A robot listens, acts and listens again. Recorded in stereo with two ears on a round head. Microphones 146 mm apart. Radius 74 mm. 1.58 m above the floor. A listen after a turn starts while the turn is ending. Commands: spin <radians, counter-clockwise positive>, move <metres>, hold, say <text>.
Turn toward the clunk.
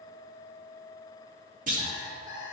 spin -0.87
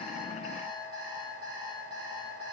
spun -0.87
hold
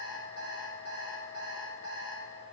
say I heard a clunk, but can't make it out now. It was about straight ahead or 80° right.